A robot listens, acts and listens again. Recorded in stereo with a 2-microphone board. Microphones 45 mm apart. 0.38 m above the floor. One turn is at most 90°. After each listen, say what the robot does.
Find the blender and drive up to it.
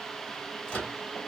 Keep listening.
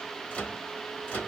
Keep listening.
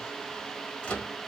I can't make out a blender, only a microwave.